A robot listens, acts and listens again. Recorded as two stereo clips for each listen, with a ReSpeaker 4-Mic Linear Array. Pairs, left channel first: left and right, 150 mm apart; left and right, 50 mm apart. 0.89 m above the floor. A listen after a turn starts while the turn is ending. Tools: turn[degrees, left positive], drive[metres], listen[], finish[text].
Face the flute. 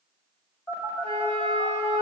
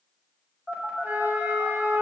Thought: The flute: about 45° right or 135° right.
Action: turn[-45]
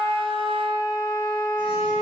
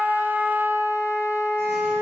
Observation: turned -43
Thought: So it is at 90° right.
Action: turn[-90]
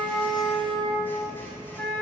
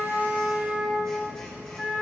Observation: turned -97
Action: finish[Facing the flute.]